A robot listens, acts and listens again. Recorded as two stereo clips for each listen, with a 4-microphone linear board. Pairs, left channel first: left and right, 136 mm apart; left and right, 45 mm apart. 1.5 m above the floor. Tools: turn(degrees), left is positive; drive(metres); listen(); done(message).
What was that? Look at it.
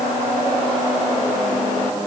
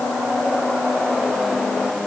listen()
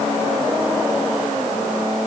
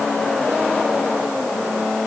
listen()
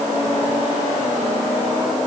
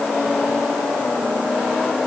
done("I can't make out anything.")